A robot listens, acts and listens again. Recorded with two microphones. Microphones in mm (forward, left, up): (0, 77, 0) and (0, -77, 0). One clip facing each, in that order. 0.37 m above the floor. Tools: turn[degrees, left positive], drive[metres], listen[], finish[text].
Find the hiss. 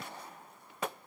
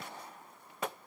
Action: listen[]
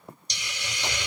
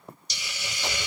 Action: turn[-30]
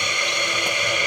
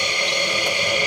Thought: So it is at 145° right.
Action: turn[-145]
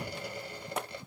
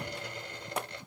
Action: listen[]
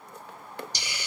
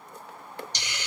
Thought: The hiss is now 10° left.
Action: turn[10]
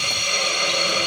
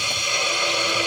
Action: finish[Facing the hiss, 1 to 2 m away.]